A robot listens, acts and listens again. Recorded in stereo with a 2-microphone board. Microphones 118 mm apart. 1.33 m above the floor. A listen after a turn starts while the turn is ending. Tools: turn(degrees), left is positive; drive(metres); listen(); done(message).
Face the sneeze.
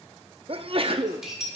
turn(degrees=-50)
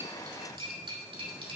listen()
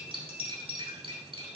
done("I heard a sneeze, but can't make it out now. It was about straight ahead or 80° right.")